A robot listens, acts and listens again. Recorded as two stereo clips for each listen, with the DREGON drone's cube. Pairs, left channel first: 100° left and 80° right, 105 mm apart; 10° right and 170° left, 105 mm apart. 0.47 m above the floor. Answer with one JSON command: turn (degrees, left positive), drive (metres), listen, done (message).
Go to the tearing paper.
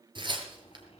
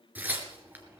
{"turn": -115}
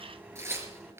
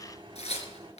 {"turn": -15}
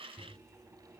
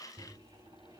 {"listen": true}
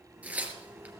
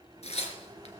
{"drive": 1.0}
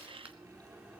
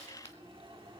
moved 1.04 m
{"listen": true}
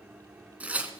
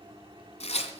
{"drive": 1.0}
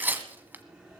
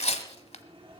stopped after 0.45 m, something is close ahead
{"done": "I am next to the tearing paper."}